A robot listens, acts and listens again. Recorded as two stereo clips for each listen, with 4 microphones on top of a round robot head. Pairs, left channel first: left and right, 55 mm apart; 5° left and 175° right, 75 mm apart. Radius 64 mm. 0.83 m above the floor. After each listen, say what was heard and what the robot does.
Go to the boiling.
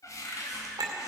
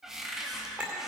Keep listening.
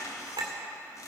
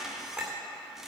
Keep listening.
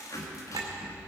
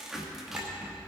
I can't make out boiling to turn to.